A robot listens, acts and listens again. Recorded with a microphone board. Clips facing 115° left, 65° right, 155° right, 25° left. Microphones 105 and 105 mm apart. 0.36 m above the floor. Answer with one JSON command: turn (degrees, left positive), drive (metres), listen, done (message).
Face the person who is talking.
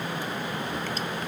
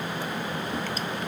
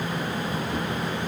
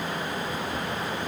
{"listen": true}
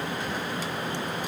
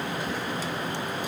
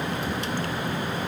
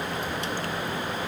{"listen": true}
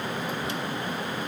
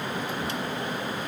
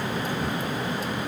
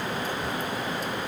{"done": "I can't make out anyone speaking."}